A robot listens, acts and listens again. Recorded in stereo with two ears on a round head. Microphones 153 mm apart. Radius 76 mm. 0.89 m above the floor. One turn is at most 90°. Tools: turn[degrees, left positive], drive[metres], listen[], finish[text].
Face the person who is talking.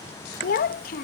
Thought: The child speaking: about 55° left or 125° left.
Action: turn[55]
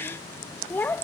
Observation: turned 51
Thought: So it is at 10° left.
Action: turn[10]
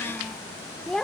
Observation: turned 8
Action: finish[Found it: a child speaking, straight ahead.]